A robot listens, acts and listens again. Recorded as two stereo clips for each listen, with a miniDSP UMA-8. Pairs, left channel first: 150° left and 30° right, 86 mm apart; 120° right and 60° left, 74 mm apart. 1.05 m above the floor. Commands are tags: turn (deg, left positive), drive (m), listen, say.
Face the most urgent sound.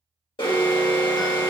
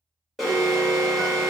<turn deg="150"/>
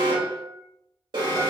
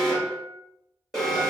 <turn deg="-35"/>
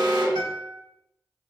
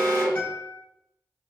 <say>Found it: an alarm, straight ahead, 1 to 2 m away.</say>